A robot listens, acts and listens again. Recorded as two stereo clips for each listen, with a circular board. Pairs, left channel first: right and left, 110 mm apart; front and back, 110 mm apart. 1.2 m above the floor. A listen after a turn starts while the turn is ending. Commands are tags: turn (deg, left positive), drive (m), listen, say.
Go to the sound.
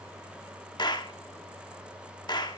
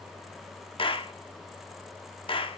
<turn deg="-40"/>
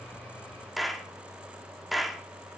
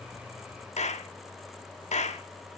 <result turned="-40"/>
<drive m="1.0"/>
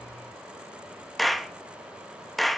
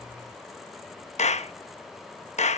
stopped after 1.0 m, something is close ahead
<say>I am next to the clap.</say>